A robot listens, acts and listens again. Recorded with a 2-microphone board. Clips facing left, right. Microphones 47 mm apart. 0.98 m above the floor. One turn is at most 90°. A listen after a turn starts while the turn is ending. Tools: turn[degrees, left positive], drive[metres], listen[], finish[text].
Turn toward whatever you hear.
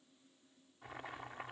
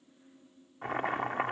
Thought: The boiling: about 70° right or 110° right.
Action: turn[-70]
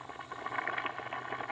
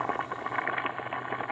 Thought: So it is at 20° right.
Action: turn[-20]
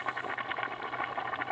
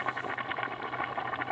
Action: finish[Found it: boiling, straight ahead.]